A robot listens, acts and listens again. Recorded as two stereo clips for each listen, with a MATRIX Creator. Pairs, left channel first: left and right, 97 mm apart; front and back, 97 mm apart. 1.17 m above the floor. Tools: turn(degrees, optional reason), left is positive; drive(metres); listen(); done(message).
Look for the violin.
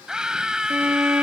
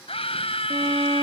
turn(degrees=-160, reason="The violin: 160° right.")
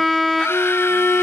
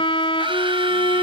done("Found it: a violin, straight ahead.")